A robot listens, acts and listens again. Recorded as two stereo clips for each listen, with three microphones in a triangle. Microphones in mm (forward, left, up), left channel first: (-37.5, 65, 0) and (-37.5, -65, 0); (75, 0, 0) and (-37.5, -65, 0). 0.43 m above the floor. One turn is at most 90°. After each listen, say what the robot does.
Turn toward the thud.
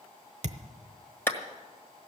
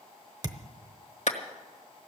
Turn 90° right.
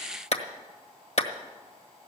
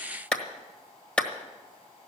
Facing where the thud came from. I can't hear it now.